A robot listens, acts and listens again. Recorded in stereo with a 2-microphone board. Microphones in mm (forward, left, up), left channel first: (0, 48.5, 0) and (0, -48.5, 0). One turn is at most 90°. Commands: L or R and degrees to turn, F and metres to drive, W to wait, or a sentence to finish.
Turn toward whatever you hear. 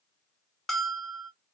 L30
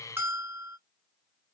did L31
R25
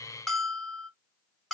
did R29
Facing the bell.